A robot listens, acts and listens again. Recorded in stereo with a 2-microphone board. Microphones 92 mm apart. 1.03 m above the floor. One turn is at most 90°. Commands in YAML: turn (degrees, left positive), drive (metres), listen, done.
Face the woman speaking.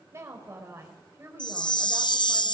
turn: -30
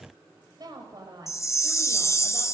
turn: -90
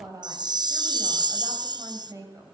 turn: -45
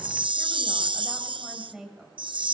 turn: -10
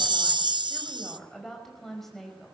done: "Facing the woman speaking, over 4 m away."